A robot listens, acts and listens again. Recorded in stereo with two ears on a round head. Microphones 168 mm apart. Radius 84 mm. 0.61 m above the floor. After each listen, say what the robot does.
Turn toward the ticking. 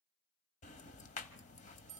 Turn 40° left.
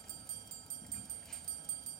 Facing the ticking, 1 to 2 m away.